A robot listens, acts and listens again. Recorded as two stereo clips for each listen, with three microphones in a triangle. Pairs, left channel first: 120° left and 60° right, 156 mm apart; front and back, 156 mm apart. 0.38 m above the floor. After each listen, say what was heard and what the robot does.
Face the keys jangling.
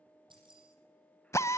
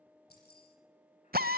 Found it: keys jangling, straight ahead, over 4 m away.